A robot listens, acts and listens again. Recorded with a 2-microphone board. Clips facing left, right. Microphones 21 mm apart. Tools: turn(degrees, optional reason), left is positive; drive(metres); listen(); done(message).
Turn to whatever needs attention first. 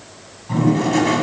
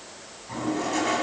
listen()
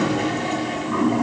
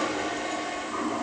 listen()
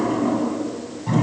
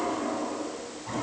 done("I can't make out anything urgent, only a toilet flushing.")